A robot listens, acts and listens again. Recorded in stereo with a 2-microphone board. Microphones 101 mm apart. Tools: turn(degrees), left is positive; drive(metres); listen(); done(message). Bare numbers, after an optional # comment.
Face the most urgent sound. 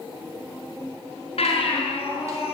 turn(90)
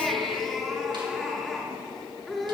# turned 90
done("Found it: a baby crying, straight ahead, over 4 m away.")